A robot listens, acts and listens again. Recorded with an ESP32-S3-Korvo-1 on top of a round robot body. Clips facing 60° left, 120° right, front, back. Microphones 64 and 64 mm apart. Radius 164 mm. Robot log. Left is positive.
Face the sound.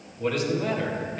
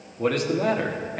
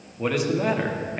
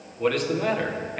note: The man speaking: 80° right.
cmd yaw -80
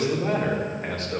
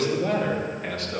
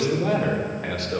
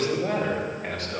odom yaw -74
end: Found it: a man speaking, straight ahead, 2 to 4 m away.